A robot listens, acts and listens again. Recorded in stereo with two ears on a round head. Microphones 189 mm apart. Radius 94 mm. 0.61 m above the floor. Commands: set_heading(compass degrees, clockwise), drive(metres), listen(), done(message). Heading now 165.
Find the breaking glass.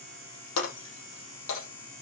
set_heading(90)
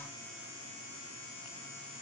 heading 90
listen()
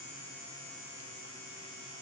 done("I heard breaking glass, but can't make it out now. It was about straight ahead or 30° left.")